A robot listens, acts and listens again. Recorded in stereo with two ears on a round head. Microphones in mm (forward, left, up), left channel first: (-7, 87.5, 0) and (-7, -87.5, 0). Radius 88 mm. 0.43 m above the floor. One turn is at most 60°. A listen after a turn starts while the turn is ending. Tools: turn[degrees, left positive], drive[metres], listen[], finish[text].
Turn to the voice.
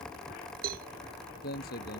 Thought: The man speaking: about 45° left or 135° left.
Action: turn[45]
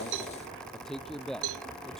Action: finish[Facing the man speaking.]